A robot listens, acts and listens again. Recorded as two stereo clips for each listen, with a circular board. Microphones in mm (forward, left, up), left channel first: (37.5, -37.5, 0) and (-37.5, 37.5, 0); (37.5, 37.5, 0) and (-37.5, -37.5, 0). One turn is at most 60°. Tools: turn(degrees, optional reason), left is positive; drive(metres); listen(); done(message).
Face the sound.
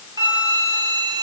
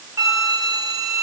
turn(degrees=60, reason="The flute: 175° left.")
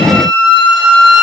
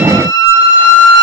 turn(degrees=60, reason="The flute is now 100° left.")
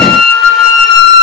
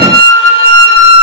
turn(degrees=50, reason="The flute is now 50° left.")
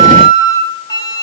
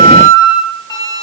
done("Found it: a flute, straight ahead, under 1 m away.")